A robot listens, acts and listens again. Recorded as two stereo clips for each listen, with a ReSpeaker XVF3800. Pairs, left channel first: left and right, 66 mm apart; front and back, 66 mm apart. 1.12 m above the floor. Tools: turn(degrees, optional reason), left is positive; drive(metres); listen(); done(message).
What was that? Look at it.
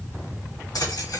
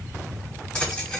turn(degrees=75, reason="The keys jangling: 75° left.")
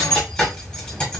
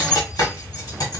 turn(degrees=15, reason="The keys jangling is now 15° left.")
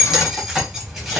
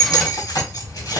done("Facing the keys jangling.")